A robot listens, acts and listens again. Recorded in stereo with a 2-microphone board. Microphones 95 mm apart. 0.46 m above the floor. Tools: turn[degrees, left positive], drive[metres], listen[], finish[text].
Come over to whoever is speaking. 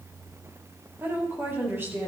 Thought: The woman speaking: about 25° right or 155° right.
Action: turn[-25]
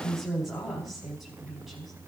Action: drive[1.0]
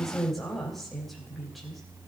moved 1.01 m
Action: drive[1.0]
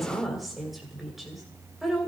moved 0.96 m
Action: drive[1.0]
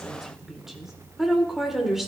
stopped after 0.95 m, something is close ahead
Action: finish[I am next to the woman speaking.]